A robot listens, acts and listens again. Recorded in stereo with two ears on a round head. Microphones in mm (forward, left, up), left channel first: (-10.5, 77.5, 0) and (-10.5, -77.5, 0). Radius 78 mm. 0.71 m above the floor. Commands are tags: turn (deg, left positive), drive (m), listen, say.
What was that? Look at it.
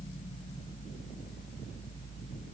<listen/>
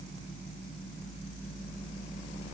<listen/>
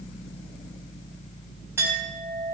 <turn deg="-30"/>
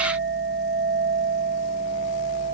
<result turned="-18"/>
<turn deg="-150"/>
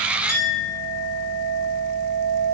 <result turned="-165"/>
<turn deg="15"/>
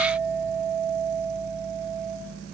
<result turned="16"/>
<say>Facing the clink.</say>